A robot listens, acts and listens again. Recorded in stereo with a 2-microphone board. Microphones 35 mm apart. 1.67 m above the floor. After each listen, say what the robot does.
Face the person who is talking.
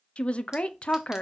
Turn 35° left.
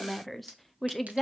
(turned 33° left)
Found it: a woman speaking, straight ahead.